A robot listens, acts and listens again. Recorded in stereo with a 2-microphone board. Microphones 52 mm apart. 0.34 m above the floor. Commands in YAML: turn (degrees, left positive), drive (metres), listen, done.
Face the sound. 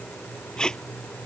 turn: 15
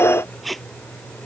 done: "Facing the tape being pulled."